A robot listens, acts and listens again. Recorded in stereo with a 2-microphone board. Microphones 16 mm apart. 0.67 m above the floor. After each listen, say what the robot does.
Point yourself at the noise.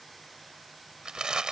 Turn 75° right.
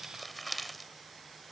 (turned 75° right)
Facing the crumpling.